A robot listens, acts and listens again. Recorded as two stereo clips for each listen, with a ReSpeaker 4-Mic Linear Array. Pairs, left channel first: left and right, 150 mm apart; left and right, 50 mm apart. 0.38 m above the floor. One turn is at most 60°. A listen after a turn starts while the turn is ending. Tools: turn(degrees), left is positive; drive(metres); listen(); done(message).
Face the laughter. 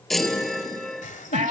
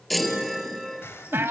turn(degrees=60)
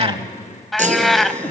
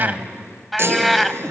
listen()
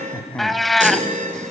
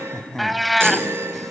turn(degrees=10)
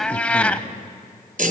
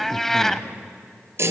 listen()
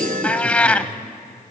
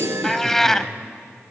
listen()
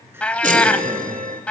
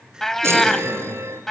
turn(degrees=-15)
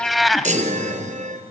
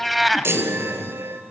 listen()
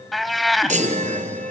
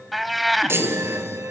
listen()
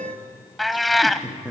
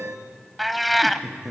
done("Facing the laughter.")